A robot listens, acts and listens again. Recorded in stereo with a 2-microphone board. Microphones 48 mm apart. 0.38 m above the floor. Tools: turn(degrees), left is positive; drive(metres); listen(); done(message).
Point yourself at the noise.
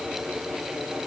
listen()
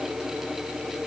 listen()
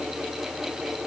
done("I can't make out anything to turn to.")